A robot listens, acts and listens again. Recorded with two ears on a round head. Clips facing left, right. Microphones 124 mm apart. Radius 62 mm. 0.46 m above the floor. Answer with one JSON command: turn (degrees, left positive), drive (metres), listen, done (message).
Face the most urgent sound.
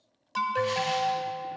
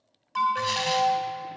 {"turn": 40}
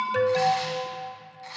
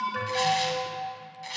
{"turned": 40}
{"turn": 95}
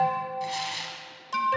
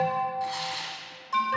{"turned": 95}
{"turn": 40}
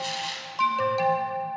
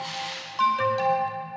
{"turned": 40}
{"turn": 10}
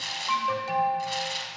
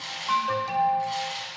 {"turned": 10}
{"done": "Facing the alarm."}